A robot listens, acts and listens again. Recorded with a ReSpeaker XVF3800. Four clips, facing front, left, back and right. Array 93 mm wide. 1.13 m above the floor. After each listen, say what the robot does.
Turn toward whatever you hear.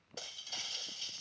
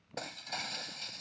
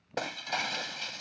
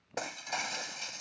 Turn 165° right.
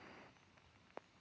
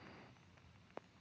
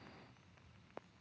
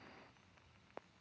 Facing where the breaking glass came from. I can't hear it now.